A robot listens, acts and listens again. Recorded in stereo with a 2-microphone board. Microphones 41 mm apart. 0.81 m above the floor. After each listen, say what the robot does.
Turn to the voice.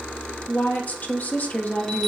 Turn 45° left.
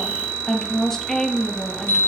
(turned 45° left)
Turn 15° left.
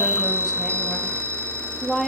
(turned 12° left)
Facing the woman speaking.